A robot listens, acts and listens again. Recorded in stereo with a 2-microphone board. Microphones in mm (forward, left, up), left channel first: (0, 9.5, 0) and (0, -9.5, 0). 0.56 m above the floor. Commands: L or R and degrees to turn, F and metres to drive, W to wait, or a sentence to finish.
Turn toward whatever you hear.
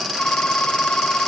L90
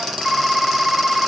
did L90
Facing the phone ringing.